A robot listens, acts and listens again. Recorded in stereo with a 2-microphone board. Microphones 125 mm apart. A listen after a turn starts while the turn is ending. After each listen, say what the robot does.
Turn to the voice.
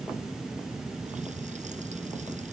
Keep listening.
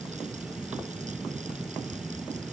Keep listening.
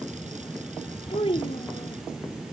Turn 55° left.
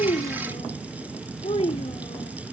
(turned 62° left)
Turn 65° left.
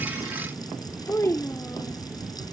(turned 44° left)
Turn 20° left.
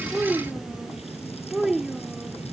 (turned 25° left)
Facing the child speaking.